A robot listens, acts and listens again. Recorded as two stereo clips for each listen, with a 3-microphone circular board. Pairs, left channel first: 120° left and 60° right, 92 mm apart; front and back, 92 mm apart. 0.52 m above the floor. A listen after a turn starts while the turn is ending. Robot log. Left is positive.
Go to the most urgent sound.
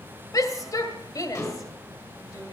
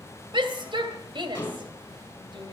note: The shout: 165° left.
cmd yaw +165
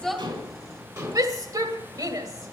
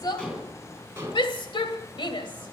note: The shout is now 15° right.
cmd yaw -15
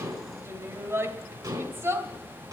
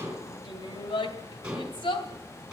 cmd fwd 1.0
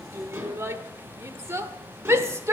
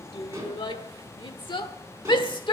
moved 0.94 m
cmd fwd 1.0
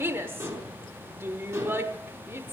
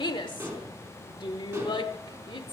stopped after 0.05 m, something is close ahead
end: Arrived at the shout, straight ahead.